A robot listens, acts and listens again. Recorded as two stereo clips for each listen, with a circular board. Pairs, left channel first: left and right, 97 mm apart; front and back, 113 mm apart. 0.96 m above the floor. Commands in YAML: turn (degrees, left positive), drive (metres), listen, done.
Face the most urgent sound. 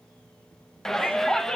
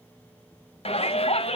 done: "Found it: a shout, straight ahead, under 1 m away."